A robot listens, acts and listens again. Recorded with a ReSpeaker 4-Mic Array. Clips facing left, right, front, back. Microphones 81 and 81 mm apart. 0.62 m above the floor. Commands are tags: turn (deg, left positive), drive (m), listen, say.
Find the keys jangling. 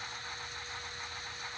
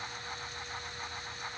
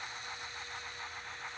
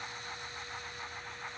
<listen/>
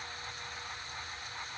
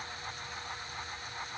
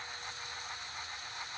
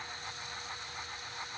<listen/>
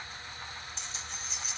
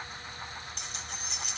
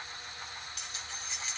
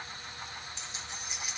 <turn deg="-105"/>
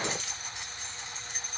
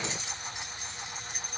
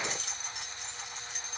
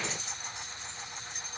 <turn deg="-10"/>
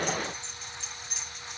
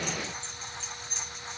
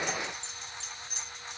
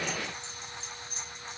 <turn deg="10"/>
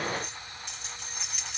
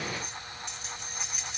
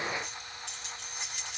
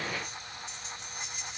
<say>Facing the keys jangling.</say>